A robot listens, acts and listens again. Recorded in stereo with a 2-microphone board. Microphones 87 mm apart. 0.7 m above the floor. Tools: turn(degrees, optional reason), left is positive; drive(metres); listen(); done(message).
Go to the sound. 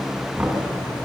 turn(degrees=-20, reason="The knocking: about 20° right or 160° right.")
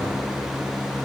listen()
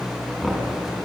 drive(metres=1.0)
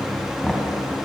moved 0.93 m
drive(metres=1.0)
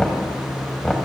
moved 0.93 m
drive(metres=1.0)
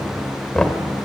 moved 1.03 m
turn(degrees=10, reason="The knocking is now 10° left.")
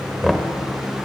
drive(metres=1.0)
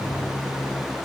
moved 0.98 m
drive(metres=1.0)
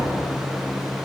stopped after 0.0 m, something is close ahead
listen()
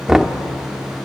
done("Arrived at the knocking, straight ahead.")